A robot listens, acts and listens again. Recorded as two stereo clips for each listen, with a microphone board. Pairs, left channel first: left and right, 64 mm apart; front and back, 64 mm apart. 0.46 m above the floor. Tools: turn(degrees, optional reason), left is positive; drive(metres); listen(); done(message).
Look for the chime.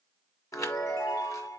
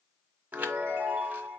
turn(degrees=120, reason="The chime: 120° left.")
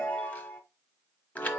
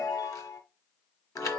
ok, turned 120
turn(degrees=25, reason="The chime is now 25° left.")
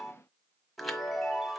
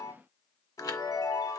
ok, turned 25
done("Facing the chime.")